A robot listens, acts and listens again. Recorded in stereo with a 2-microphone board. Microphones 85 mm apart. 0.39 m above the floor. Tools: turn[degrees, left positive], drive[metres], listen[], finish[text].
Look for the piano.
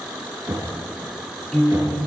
Action: turn[30]
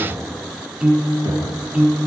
Thought: So it is at 20° right.
Action: turn[-20]
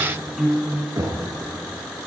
Action: finish[Found it: a piano, straight ahead.]